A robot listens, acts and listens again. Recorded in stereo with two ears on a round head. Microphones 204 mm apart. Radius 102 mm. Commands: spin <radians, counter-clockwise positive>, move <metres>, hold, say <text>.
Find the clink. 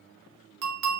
spin -1.57
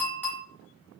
spin 0.17
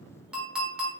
say Found it: a clink, straight ahead.